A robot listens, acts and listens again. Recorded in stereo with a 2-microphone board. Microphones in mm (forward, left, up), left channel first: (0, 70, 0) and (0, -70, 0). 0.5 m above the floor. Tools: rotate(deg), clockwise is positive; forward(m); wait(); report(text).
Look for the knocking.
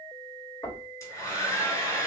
rotate(-20)
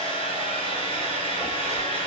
wait()
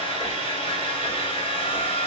wait()
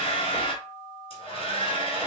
report("I heard knocking, but can't make it out now. It was about straight ahead or 140° left.")